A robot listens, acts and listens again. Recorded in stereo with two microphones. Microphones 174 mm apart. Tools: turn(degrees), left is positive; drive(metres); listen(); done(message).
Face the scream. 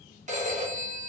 listen()
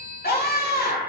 turn(degrees=60)
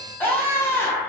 turn(degrees=15)
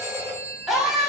done("Facing the scream, under 1 m away.")